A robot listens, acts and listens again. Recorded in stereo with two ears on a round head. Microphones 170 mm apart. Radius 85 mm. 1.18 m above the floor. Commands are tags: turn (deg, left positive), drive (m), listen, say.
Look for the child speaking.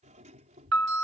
<turn deg="-40"/>
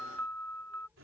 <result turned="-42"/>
<turn deg="-10"/>
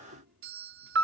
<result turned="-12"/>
<listen/>
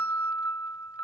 <listen/>
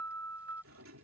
<say>I heard a child speaking from this way, but can't make it out now.</say>